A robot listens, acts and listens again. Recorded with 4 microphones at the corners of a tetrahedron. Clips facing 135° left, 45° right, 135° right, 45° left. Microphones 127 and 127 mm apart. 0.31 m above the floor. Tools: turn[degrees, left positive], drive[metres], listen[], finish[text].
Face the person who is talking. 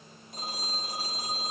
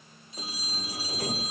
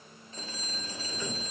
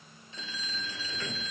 Action: listen[]
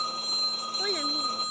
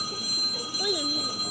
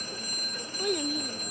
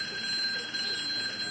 Thought: The child speaking: 125° right.
Action: turn[-125]
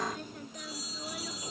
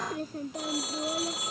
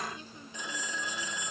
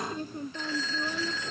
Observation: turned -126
Action: finish[Found it: a child speaking, straight ahead.]